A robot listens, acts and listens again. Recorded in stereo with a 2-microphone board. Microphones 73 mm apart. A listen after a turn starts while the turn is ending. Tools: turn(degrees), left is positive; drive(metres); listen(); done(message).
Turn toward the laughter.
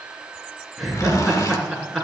turn(degrees=-30)
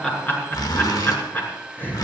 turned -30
turn(degrees=25)
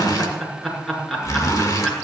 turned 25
done("Found it: laughter, straight ahead, over 4 m away.")